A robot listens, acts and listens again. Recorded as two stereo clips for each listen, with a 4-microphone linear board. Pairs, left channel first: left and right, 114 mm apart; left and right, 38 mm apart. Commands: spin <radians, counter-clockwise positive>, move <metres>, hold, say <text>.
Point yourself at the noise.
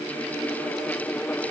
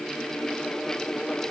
hold
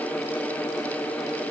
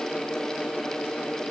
hold
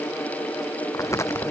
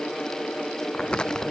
spin 0.44
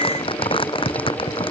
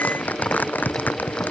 spin 2.27
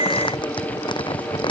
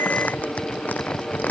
spin 0.79
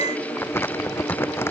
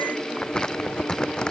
spin 0.35
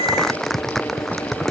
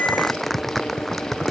say Facing the crumpling.